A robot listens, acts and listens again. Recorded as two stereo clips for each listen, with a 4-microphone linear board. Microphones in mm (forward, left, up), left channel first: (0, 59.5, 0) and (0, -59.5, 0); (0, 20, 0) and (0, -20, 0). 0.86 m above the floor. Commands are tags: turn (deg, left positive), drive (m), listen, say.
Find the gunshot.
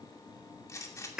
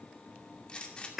<turn deg="25"/>
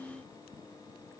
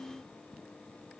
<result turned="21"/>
<listen/>
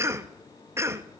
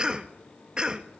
<say>I heard a gunshot, but can't make it out now. It was about 5° left or 130° left.</say>